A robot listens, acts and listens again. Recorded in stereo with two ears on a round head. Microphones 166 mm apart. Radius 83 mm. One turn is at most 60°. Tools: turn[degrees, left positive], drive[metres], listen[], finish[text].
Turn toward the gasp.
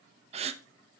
Thought: The gasp: about 35° right or 145° right.
Action: turn[-35]
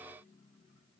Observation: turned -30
Action: listen[]
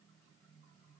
Action: finish[I heard a gasp, but can't make it out now. It was about 5° right or 115° right.]